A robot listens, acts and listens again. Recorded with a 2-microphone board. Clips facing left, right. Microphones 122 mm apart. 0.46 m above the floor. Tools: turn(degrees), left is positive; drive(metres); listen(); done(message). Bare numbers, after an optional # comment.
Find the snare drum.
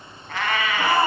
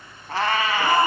listen()
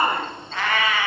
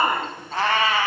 listen()
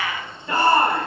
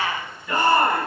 done("I can't make out a snare drum to turn to.")